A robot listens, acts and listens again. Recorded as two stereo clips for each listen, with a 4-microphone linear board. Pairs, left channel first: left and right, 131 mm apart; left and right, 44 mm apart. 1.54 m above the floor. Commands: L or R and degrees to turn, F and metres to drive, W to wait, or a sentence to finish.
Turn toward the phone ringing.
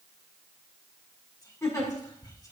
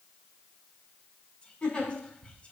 W
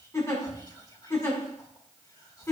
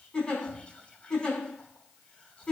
W
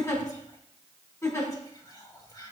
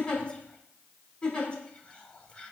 I can't make out a phone ringing, only whispering and a giggle.